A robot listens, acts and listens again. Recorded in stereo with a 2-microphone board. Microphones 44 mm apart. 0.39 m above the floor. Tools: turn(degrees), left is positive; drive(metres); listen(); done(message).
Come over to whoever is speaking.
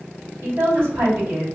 turn(degrees=-60)
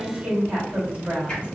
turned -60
turn(degrees=-25)
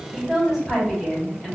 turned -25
drive(metres=1.0)
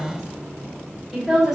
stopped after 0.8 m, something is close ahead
done("Arrived at the woman speaking, straight ahead.")